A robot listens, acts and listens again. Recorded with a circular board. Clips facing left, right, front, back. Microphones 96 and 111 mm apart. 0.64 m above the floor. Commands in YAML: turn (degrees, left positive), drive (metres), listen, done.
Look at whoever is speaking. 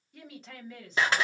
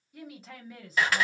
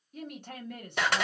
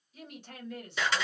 done: "Facing the woman speaking."